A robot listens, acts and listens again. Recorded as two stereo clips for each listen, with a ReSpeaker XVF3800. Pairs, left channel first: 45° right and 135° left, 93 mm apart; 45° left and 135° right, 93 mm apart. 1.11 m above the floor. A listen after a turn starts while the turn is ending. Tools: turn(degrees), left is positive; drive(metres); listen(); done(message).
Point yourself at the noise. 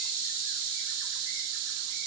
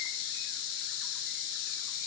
listen()
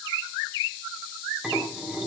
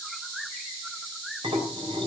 turn(degrees=-145)
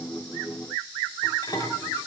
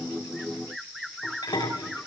done("Facing the dishes clattering.")